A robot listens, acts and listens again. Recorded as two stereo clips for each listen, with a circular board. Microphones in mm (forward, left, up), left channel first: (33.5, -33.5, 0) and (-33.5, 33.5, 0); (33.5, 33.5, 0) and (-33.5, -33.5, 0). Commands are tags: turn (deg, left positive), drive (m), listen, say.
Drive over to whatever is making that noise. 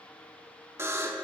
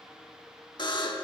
<turn deg="75"/>
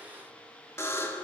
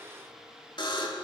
<turn deg="15"/>
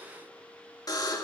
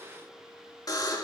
<drive m="1.0"/>
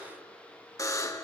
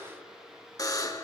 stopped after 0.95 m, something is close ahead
<say>Arrived at the buzzer, straight ahead.</say>